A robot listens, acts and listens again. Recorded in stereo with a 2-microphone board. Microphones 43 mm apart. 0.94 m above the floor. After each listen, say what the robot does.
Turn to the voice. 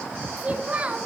Turn 30° right.
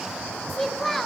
Found it: a child speaking, straight ahead, 1 to 2 m away.